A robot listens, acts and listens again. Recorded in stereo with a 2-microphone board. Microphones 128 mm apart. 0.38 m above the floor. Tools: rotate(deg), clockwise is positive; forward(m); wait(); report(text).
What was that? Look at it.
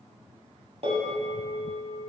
rotate(55)
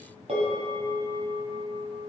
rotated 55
rotate(65)
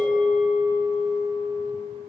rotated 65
report("Found it: a bell, straight ahead, 2 to 4 m away.")